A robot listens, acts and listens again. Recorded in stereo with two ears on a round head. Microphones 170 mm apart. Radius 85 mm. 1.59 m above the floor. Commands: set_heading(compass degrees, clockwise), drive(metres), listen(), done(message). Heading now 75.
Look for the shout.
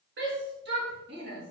set_heading(135)
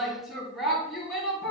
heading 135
done("Found it: a shout, straight ahead, 2 to 4 m away.")